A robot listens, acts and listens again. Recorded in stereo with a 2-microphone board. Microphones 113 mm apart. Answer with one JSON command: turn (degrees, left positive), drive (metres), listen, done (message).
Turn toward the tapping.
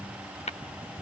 {"turn": 90}
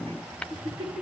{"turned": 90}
{"turn": 10}
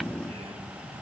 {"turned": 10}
{"listen": true}
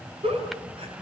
{"listen": true}
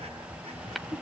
{"done": "Facing the tapping."}